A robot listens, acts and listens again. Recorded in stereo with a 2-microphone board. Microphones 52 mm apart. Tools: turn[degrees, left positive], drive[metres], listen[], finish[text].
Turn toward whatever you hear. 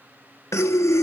Thought: The breathing: about 70° left or 110° left.
Action: turn[70]
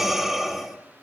Action: finish[Facing the breathing, 1 to 2 m away.]